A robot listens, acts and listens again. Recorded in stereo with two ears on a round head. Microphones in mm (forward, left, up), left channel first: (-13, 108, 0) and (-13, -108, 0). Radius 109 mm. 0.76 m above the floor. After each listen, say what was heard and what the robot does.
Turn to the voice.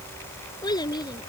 The child speaking: about 20° left or 160° left. Turn 20° left.
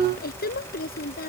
So it is at 140° left. Turn 140° left.
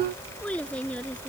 Facing the child speaking.